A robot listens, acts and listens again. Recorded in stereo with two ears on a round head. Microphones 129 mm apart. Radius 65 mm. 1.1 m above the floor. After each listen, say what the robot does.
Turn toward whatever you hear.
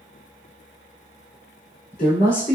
Turn 65° left.
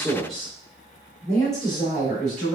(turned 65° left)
Facing the woman speaking, 2 to 4 m away.